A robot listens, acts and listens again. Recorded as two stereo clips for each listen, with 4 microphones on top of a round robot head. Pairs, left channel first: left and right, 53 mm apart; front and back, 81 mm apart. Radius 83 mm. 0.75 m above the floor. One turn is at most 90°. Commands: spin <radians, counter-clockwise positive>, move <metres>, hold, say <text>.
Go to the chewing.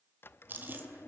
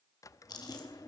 spin -0.70
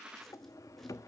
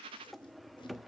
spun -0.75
hold
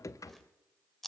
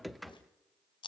move 1.0
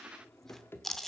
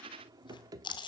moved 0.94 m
move 1.0
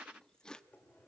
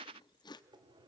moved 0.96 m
spin 0.26
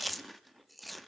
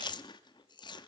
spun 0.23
move 1.0
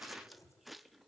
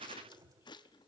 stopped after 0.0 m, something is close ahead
say I am next to the chewing.